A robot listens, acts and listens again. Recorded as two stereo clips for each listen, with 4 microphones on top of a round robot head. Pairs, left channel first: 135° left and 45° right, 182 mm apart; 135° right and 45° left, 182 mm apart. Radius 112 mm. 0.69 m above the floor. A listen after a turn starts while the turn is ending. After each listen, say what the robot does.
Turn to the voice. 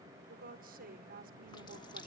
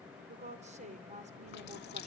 Found it: a woman speaking, straight ahead.